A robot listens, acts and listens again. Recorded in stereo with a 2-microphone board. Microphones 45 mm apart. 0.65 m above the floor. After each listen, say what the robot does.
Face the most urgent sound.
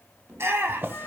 Turn 65° right.
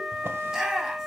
Turn 15° right.
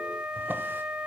Keep listening.
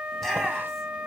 Facing the shout.